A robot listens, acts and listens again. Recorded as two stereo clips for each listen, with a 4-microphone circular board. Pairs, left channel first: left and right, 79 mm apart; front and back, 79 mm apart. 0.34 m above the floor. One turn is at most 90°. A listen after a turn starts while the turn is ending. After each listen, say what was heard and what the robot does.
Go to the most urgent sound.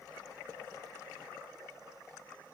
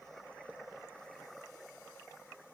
Keep listening.
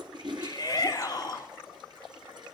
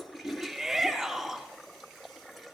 The shout: 100° left. Turn 90° left.
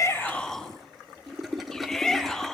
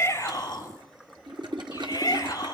The shout is now 10° left. Turn 10° left.
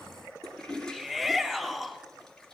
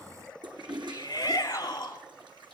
Drive 1.0 m forward.
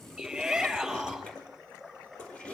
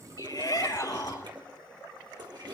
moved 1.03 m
Drive 1.0 m forward.
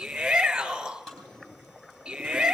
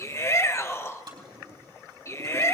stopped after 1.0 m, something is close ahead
The shout is now 10° right. Turn 10° right.
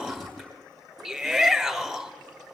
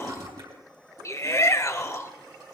Arrived at the shout, straight ahead.